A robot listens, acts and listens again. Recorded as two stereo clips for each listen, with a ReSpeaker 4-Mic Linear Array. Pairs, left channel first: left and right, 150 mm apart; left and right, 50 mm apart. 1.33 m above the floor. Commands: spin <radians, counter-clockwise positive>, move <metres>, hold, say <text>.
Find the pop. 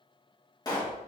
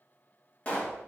spin 0.44
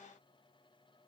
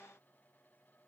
hold
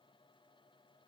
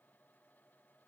say I heard a pop, but can't make it out now. It was about straight ahead or 130° left.